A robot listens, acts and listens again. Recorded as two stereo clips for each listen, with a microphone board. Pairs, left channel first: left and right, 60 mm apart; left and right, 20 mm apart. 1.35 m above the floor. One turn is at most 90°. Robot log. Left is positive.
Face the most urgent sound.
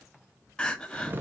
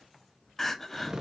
cmd yaw +30
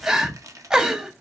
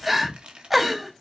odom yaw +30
note: So it is at 15° right.
cmd yaw -15
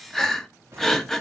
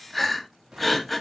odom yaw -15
end: Found it: crying, straight ahead.